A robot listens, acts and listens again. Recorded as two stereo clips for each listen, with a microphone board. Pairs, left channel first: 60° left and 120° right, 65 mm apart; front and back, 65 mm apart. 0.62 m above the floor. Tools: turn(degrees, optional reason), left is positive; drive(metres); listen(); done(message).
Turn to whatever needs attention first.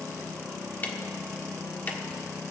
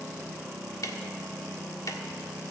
listen()
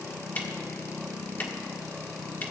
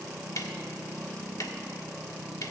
listen()
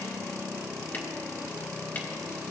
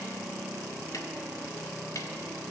done("I can't make out anything urgent to turn to.")